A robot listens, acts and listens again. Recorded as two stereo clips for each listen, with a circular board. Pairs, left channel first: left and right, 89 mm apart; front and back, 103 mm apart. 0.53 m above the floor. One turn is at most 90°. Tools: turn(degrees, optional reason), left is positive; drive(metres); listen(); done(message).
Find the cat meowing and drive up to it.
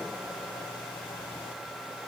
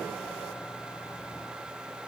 listen()
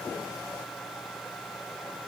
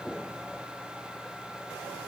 listen()
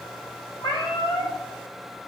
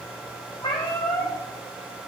turn(degrees=35, reason="The cat meowing: 35° left.")
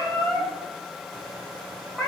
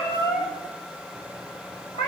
drive(metres=1.0)
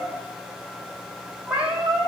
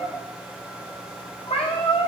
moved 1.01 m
turn(degrees=-10, reason="The cat meowing is now 10° right.")
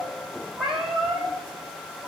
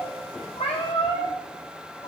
drive(metres=1.0)
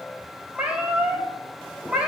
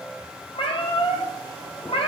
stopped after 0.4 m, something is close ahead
turn(degrees=-10, reason="The cat meowing is now 10° right.")
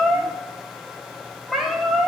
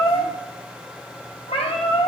done("Arrived at the cat meowing, straight ahead.")